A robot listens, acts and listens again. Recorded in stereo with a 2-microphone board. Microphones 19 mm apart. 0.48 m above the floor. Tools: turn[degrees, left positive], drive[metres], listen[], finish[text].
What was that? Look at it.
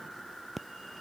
Action: turn[-30]
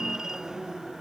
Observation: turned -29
Thought: So it is at 145° right.
Action: turn[-145]
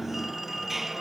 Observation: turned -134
Thought: The phone ringing is now 10° right.
Action: turn[-10]
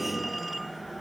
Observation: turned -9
Action: finish[Found it: a phone ringing, straight ahead.]